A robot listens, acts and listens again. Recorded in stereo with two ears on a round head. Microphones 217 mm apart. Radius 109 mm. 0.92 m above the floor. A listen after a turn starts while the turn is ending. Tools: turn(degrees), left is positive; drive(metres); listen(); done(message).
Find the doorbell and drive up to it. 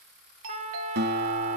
turn(degrees=-60)
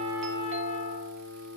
listen()
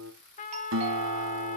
listen()
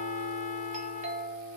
turn(degrees=-35)
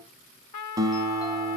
listen()
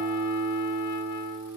listen()
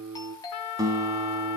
turn(degrees=20)
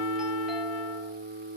listen()
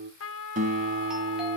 listen()
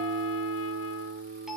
done("I heard a doorbell from this way, but can't make it out now. I did not reach it.")